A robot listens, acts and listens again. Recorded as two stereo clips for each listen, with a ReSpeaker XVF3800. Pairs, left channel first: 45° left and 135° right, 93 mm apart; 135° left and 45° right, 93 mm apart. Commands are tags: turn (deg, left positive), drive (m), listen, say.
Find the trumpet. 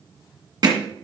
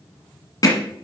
<listen/>
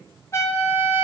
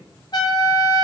<turn deg="100"/>
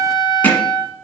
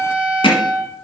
<turn deg="35"/>
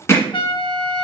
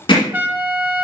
<turn deg="25"/>
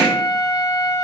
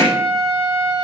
<turn deg="-10"/>
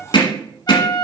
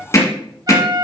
<say>Found it: a trumpet, straight ahead.</say>